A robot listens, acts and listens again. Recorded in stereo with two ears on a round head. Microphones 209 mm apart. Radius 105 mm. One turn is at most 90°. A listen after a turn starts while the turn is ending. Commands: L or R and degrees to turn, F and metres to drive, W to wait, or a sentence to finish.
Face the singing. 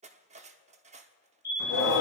L75
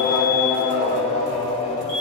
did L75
L25
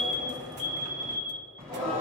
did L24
Facing the singing, over 4 m away.